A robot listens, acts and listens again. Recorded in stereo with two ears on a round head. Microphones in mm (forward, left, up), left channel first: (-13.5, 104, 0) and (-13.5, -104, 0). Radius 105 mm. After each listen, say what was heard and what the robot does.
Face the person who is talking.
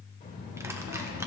The child speaking: about 45° left or 135° left. Turn 45° left.
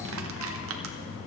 So it is at 65° left. Turn 65° left.
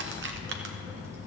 The child speaking is now 15° right. Turn 15° right.
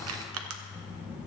The child speaking is now 10° right. Turn 10° right.
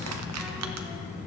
Facing the child speaking, over 4 m away.